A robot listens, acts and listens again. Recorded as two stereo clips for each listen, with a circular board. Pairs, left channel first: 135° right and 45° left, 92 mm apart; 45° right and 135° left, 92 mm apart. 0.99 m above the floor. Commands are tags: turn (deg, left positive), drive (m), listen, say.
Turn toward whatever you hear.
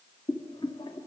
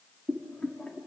<turn deg="-120"/>
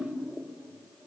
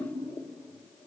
<listen/>
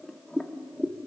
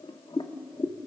<turn deg="-50"/>
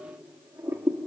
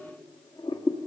<turn deg="-20"/>
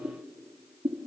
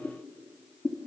<say>Facing the boiling.</say>